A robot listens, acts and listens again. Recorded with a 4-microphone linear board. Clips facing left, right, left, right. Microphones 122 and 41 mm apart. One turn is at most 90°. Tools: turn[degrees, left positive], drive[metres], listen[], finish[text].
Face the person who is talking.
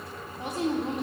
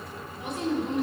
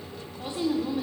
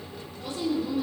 Thought: The woman speaking: about 35° left or 145° left.
Action: turn[35]
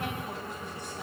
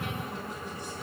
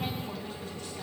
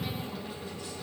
Action: listen[]
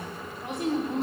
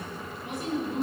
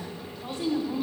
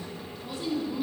Thought: So it is at 110° left.
Action: turn[90]
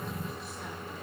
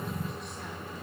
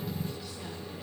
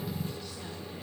Thought: Nothing new. It was at 20° left.
Action: turn[20]
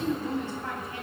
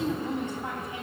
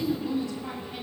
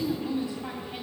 Thought: The woman speaking is now 20° right.
Action: turn[-20]
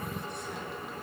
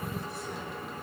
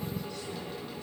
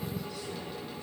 Action: listen[]
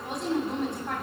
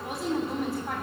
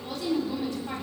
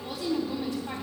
Action: finish[Facing the woman speaking.]